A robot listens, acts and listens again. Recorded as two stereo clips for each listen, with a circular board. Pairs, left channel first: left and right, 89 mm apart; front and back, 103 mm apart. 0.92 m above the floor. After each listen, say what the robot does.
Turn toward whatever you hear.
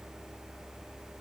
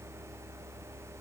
Keep listening.
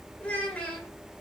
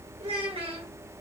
Turn 165° left.
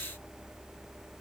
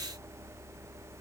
Keep listening.
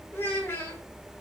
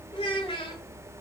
Turn 25° left.
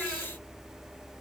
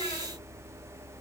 Keep listening.
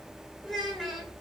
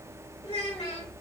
Found it: a child speaking, straight ahead.